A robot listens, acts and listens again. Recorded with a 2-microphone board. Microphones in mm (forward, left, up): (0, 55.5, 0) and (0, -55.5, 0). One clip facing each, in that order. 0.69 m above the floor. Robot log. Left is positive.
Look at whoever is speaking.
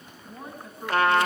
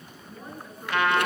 cmd yaw +90
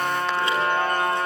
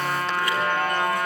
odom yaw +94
cmd idle
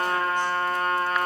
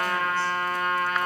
cmd idle
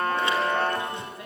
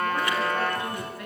note: The woman speaking is now 25° left.
cmd yaw +25
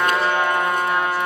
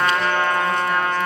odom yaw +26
cmd idle
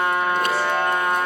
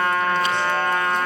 cmd idle
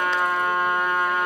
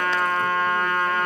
end: I heard a woman speaking from this way, but can't make it out now.